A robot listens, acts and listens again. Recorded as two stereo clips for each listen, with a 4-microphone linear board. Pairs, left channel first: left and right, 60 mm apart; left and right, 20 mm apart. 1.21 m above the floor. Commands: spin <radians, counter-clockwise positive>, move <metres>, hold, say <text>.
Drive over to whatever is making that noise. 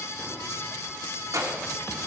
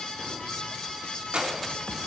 spin -1.13
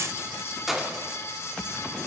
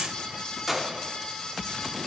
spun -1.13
move 1.0
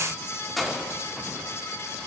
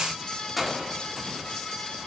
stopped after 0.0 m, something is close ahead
say Blocked. The keys jangling is further on, straight ahead.